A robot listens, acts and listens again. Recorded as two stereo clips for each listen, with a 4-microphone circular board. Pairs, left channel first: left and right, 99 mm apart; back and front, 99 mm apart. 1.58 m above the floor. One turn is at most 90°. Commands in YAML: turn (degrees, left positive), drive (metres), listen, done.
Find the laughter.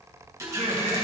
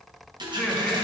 turn: -90
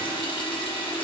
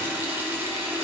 turn: -10
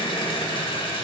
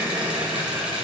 turn: 50
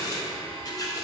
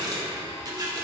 listen: true
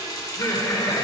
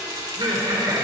turn: 30
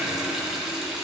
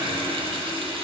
listen: true
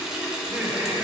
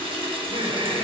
turn: -20
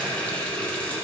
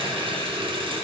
listen: true
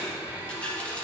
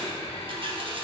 listen: true
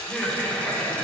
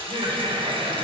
done: "Facing the laughter."